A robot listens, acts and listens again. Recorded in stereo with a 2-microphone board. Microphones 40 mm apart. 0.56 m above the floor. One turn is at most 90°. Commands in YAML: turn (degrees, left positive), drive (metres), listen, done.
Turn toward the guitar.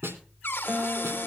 turn: -50
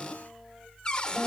done: "Found it: a guitar, straight ahead, 1 to 2 m away."